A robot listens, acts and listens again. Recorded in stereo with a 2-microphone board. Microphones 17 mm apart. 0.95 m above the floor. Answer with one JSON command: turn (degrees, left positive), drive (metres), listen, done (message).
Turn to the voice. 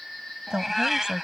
{"turn": -65}
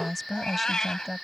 {"done": "Facing the woman speaking."}